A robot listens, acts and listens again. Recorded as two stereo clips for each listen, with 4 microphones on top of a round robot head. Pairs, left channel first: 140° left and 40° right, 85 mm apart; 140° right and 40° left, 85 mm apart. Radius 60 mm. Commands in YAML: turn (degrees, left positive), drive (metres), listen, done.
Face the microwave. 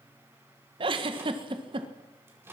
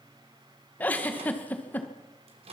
turn: 25
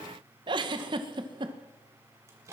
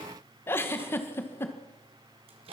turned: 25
turn: 20
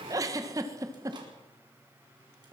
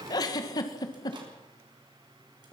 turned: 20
listen: true
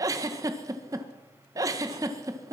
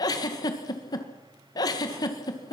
listen: true
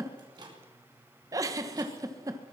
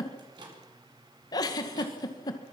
done: "Facing the microwave."